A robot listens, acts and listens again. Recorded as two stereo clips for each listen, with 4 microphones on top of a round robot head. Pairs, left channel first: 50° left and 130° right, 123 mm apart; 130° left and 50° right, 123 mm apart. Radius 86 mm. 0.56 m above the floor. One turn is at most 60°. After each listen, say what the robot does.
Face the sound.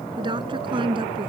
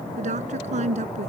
Turn 60° right.
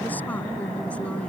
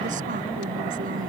Turn 20° right.
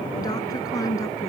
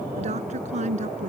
Turn 15° right.
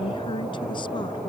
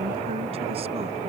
Keep listening.
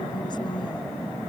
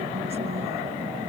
Keep listening.
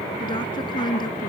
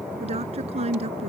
Turn 10° right.
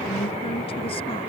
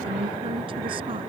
Keep listening.
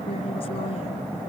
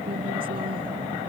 Keep listening.
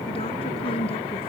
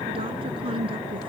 Facing the woman speaking.